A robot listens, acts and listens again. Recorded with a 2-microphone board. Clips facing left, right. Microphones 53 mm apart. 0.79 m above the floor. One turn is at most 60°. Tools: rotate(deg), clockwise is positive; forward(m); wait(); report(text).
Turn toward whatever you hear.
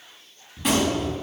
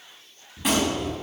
rotate(30)
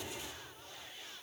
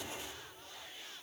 wait()
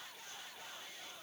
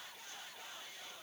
report("I heard a gunshot, but can't make it out now. It was about 25° left or 145° right.")